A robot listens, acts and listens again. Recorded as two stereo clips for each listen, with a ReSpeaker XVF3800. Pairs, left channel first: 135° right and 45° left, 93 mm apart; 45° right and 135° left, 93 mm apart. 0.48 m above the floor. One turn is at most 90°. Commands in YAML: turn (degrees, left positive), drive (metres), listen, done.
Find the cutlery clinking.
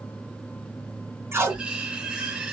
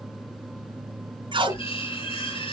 turn: -35
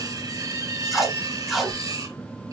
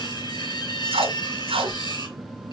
done: "Facing the cutlery clinking, over 4 m away."